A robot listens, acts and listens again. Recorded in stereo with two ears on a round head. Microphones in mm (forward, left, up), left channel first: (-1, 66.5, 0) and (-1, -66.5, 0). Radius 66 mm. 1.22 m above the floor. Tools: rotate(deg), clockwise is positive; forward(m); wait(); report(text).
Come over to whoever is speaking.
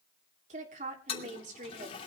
rotate(55)
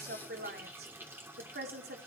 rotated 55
rotate(75)
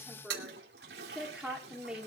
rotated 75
forward(1.0)
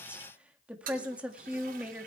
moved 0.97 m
rotate(10)
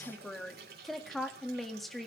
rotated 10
forward(1.0)
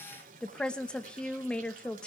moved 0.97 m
forward(1.0)
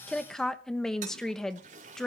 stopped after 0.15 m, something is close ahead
report("Arrived at the woman speaking, straight ahead.")